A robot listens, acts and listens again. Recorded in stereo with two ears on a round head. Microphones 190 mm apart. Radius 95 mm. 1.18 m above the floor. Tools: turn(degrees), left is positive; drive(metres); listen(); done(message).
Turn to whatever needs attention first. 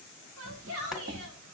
turn(degrees=-90)
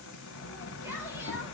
listen()
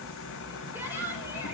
turn(degrees=-10)
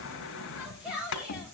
done("Facing the shout, 2 to 4 m away.")